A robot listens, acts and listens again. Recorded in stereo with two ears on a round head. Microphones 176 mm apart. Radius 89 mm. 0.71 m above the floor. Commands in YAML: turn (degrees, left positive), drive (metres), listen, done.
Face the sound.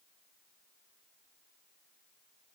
listen: true
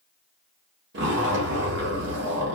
turn: -60
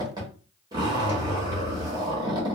turn: -25
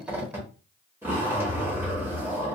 turn: -10
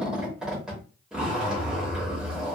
done: "Facing the zipper."